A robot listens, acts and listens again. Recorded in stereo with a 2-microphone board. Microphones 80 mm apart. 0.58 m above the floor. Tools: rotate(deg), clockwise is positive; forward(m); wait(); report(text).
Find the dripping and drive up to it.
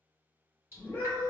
rotate(30)
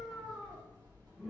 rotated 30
rotate(115)
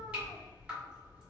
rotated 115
rotate(20)
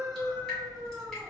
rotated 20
forward(1.0)
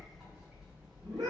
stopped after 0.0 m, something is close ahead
report("Something is in my way. I am facing the dripping but have not reached it.")